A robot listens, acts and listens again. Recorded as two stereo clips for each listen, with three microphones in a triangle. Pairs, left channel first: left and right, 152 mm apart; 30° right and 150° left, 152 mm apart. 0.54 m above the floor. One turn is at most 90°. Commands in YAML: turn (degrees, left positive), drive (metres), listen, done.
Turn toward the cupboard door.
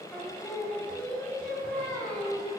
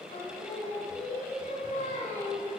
listen: true
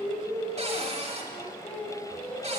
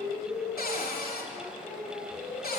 turn: -40
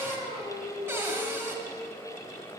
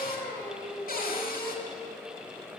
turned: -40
turn: -15
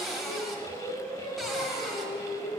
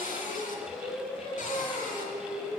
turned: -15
done: "Found it: a cupboard door, straight ahead, 1 to 2 m away."